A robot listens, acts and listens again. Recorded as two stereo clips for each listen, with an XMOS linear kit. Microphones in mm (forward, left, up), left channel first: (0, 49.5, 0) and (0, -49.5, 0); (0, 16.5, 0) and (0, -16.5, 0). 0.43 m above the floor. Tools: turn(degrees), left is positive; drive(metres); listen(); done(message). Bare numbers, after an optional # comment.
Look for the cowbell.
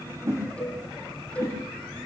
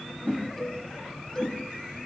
turn(30)
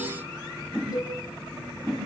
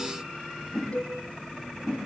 # So it is at 135° left.
turn(135)
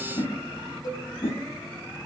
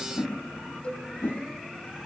# The cowbell is now 40° left.
turn(40)
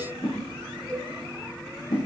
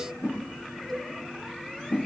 # The cowbell is now 10° left.
turn(10)
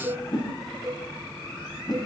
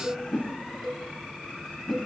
done("Facing the cowbell, 1 to 2 m away.")